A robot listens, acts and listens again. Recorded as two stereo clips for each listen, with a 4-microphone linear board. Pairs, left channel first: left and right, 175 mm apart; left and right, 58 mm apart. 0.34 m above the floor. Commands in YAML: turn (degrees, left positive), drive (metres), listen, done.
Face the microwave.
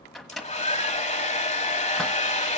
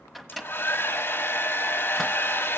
turn: 30
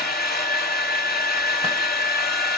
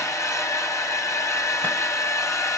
listen: true
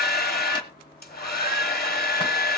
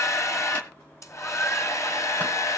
listen: true
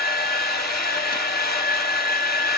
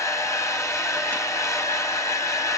done: "I heard a microwave, but can't make it out now. It was about 30° right or 150° left."